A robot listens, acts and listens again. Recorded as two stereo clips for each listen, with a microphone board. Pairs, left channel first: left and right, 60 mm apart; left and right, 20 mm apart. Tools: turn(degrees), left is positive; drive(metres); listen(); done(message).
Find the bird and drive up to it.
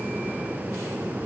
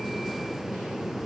listen()
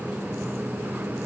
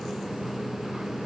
listen()
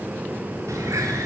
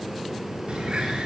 turn(degrees=-60)
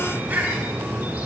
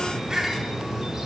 turn(degrees=-30)
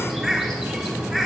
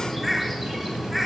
drive(metres=1.0)
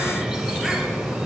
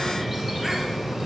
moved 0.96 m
drive(metres=1.0)
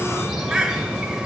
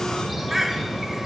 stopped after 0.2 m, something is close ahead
turn(degrees=-15)
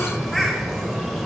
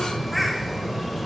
done("I am next to the bird.")